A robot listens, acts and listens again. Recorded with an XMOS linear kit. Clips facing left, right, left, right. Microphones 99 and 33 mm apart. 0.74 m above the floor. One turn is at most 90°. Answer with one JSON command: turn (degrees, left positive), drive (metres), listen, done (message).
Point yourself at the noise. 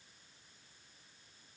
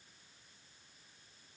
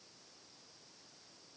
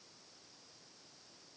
{"listen": true}
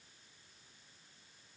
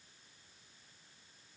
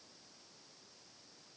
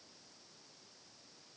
{"listen": true}
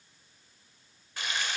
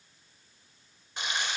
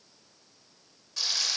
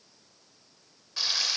{"turn": -20}
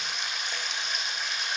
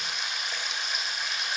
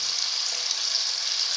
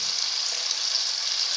{"done": "Facing the frying."}